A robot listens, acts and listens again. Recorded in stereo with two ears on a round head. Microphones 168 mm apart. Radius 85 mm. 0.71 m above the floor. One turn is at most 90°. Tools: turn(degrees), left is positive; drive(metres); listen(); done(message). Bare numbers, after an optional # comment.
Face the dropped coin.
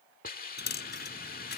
# The dropped coin: about 60° left or 120° left.
turn(60)
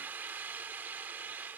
listen()
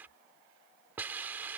done("I heard a dropped coin, but can't make it out now. It was about straight ahead or 60° left.")